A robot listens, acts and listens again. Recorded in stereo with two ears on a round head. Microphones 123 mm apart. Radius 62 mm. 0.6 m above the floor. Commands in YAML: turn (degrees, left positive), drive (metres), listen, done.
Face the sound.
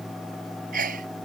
turn: -60
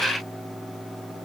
listen: true
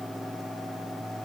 done: "I heard a sneeze, but can't make it out now. It was about straight ahead or 60° right."